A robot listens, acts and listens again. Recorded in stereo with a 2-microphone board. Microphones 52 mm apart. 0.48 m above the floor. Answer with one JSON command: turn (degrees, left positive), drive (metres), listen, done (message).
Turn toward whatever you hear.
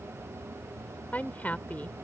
{"turn": 30}
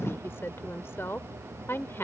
{"turn": 110}
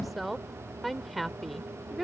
{"done": "Facing the woman speaking."}